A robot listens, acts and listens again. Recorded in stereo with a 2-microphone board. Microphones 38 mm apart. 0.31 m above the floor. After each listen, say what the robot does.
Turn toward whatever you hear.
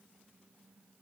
Keep listening.
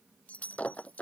Turn 35° left.
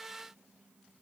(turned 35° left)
Keep listening.
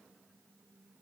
I heard breaking glass, but can't make it out now. It was about straight ahead or 110° left.